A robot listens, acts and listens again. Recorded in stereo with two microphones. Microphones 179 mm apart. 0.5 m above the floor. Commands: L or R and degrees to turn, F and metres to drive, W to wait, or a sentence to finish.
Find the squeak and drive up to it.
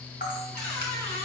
L30
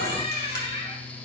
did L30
L145
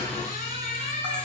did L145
L50
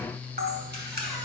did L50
W
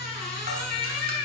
F1.0
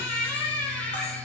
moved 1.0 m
L10
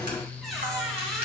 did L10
F1.0
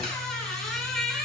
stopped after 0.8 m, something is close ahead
Arrived at the squeak, straight ahead.